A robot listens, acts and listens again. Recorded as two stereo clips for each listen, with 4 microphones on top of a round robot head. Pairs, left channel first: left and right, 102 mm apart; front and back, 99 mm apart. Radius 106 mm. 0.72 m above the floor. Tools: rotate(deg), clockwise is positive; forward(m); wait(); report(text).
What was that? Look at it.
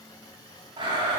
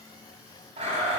rotate(145)
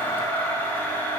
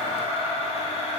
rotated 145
rotate(-15)
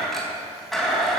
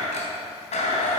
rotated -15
report("Facing the blender, 2 to 4 m away.")